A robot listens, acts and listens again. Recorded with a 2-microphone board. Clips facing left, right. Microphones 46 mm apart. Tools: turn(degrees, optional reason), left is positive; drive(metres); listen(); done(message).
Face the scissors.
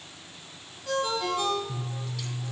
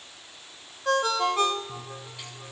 turn(degrees=-25, reason="The scissors: about 25° right or 155° right.")
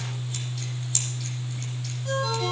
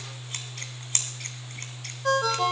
turn(degrees=-130, reason="So it is at 130° right.")
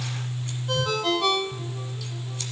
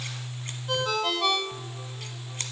turn(degrees=-40, reason="The scissors is now 40° right.")
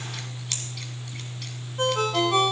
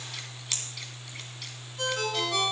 done("Found it: scissors, straight ahead.")